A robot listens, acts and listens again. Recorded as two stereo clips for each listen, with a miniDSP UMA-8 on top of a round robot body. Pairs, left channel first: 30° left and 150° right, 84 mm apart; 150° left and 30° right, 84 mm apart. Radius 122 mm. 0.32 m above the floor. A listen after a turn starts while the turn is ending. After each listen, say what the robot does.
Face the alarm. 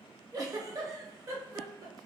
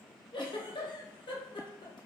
Keep listening.
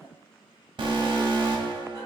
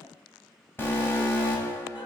Turn 145° right.
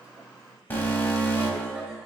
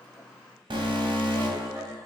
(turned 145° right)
Turn 35° right.
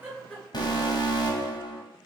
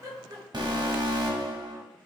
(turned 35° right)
Facing the alarm.